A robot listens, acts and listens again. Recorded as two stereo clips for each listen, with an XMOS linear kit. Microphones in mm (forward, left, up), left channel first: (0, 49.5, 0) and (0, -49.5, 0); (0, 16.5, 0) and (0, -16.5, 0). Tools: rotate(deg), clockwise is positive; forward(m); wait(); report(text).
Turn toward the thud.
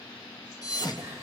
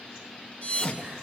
rotate(-40)
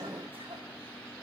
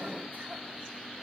wait()
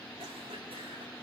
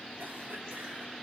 report("I heard a thud, but can't make it out now. It was about straight ahead or 100° left.")